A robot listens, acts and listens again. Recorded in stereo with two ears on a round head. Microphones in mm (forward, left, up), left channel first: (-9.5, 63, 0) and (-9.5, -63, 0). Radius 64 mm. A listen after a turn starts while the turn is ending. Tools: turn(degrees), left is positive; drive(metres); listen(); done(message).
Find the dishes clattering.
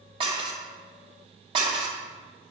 turn(degrees=-35)
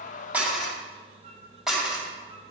done("Facing the dishes clattering, 2 to 4 m away.")